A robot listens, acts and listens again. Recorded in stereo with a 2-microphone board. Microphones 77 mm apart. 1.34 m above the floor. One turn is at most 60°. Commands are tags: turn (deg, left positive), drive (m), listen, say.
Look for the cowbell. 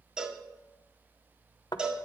<turn deg="-30"/>
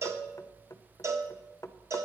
<turn deg="-60"/>
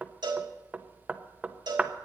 <turn deg="-60"/>
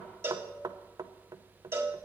<turn deg="-35"/>
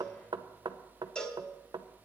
<turn deg="10"/>
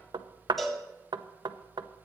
<say>Found it: a cowbell, straight ahead.</say>